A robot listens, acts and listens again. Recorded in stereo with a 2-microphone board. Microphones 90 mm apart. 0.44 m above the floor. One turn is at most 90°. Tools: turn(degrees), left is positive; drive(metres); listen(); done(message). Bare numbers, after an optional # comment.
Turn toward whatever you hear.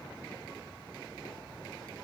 listen()
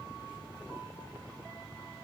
listen()
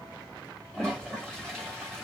turn(30)
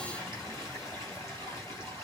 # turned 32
# So it is at 140° left.
turn(90)
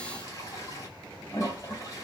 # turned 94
# The toilet flushing is now 45° left.
turn(45)
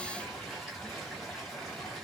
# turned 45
done("Facing the toilet flushing.")